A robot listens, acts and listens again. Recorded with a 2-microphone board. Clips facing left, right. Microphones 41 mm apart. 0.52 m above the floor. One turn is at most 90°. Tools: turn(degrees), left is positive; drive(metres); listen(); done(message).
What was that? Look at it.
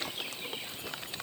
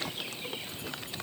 listen()
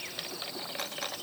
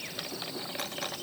listen()
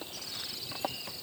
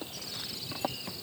done("I can't make out anything.")